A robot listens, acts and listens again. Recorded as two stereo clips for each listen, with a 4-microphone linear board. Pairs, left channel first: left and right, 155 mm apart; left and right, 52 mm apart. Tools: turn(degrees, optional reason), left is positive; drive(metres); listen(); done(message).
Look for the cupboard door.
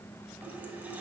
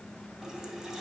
listen()
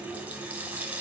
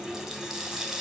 listen()
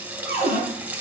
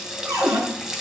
turn(degrees=-90)
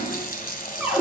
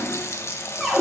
turn(degrees=-10, reason="So it is at 10° right.")
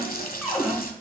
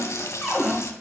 done("Facing the cupboard door, over 4 m away.")